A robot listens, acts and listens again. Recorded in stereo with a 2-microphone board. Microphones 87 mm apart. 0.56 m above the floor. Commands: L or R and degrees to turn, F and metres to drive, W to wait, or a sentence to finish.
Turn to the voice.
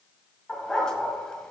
W
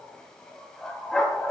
W
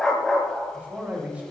R15
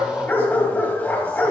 W
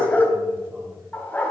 W
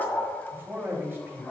R155
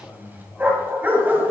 L30
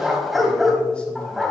W
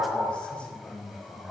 L10
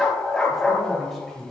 Facing the man speaking, 2 to 4 m away.